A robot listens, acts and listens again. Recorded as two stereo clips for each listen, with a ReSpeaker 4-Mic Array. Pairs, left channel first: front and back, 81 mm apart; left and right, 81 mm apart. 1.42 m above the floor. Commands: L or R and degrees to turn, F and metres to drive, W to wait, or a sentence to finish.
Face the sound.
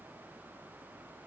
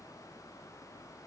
W
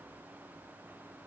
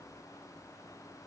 W
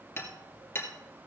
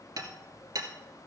R55
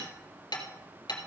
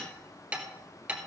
R15
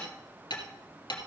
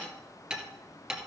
Found it: hammering, straight ahead, 2 to 4 m away.